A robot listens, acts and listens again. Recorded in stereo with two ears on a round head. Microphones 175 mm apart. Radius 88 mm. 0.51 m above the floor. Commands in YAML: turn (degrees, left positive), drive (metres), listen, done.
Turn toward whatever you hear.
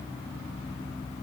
listen: true
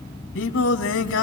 turn: 65
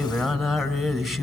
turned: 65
done: "Facing the singing."